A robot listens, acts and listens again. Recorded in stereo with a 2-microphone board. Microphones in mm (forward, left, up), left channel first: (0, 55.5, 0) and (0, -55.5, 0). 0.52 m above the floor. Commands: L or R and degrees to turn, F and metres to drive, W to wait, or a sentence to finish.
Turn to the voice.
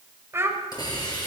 R20
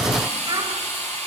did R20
R140
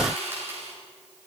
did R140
W
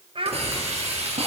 R55
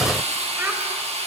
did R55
W
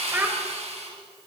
R20
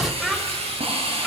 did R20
Facing the child speaking, 1 to 2 m away.